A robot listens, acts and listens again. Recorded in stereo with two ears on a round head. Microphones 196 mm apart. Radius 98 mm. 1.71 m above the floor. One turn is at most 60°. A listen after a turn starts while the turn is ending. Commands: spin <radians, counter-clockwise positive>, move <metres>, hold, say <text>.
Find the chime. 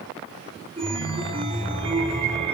spin -0.44
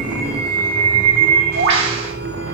spin -1.05
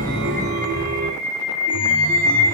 spin -0.96
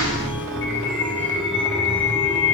say Found it: a chime, straight ahead.